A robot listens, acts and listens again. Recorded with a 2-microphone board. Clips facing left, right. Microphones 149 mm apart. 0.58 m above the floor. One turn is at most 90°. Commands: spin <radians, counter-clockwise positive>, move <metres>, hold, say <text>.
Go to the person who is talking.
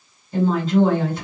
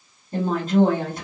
spin -0.87
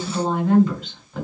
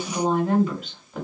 spin -0.17
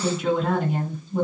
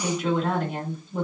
move 1.0
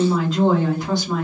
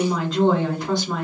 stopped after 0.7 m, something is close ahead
say Arrived at the woman speaking, straight ahead.